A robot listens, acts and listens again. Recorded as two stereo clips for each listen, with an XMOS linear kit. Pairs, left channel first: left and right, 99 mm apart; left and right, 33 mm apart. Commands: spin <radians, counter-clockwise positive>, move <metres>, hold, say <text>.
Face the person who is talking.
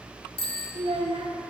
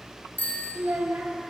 spin -1.31
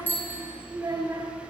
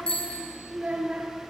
spin -0.61
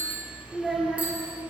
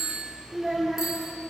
say Facing the child speaking.